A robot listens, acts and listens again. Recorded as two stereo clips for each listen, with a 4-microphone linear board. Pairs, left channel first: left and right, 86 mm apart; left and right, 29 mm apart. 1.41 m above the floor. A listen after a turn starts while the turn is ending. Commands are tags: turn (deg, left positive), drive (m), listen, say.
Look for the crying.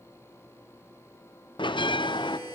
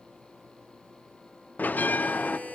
<listen/>
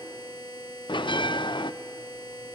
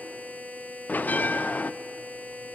<listen/>
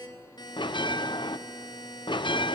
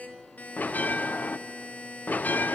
<say>I can't make out crying, only a buzzer and a bell.</say>